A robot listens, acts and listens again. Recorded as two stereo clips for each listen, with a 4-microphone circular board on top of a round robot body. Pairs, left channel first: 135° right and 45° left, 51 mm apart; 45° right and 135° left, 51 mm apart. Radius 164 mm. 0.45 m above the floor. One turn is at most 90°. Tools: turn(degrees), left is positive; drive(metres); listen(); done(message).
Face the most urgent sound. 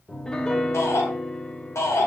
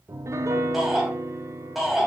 turn(degrees=-90)
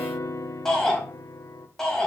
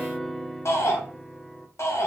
turn(degrees=-55)
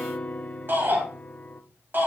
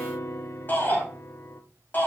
done("Facing the shout, over 4 m away.")